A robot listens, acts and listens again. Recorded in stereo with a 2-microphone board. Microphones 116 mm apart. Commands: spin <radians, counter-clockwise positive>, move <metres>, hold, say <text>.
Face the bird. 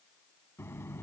hold
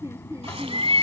spin -1.05
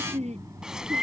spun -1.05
hold
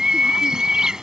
spin -0.17
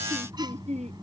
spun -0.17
hold
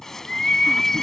say Facing the bird.